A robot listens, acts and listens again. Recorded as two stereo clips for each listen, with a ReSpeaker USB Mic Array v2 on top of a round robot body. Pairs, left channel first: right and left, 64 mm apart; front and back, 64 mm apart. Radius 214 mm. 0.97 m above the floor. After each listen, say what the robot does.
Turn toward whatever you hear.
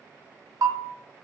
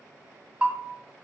Turn 110° left.
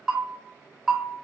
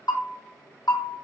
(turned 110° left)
Turn 10° left.
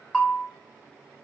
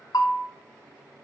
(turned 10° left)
Found it: a bell, straight ahead.